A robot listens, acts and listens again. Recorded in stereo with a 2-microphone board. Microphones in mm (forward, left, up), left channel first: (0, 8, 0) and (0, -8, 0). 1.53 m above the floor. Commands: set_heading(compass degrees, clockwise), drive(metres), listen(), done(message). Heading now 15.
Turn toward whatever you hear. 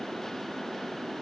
listen()
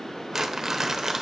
set_heading(45)
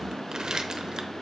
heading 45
set_heading(160)
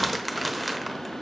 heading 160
done("Facing the crumpling, under 1 m away.")